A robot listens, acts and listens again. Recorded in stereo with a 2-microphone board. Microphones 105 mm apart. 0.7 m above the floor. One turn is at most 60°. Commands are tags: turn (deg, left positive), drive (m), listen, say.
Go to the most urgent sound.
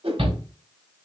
<turn deg="-60"/>
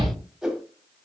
<turn deg="-55"/>
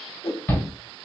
<turn deg="15"/>
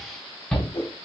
<drive m="1.0"/>
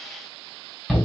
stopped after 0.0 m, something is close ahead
<say>Something is in my way. I am facing the shout but have not reached it.</say>